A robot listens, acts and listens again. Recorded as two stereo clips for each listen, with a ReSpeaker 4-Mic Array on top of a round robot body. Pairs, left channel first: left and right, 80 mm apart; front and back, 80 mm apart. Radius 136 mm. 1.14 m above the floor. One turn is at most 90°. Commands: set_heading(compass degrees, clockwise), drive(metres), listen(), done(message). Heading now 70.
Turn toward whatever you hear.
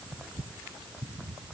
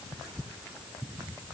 listen()
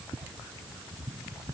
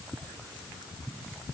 listen()
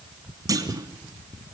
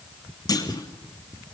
set_heading(115)
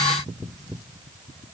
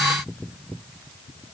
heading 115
done("I heard a clunk from this way, but can't make it out now.")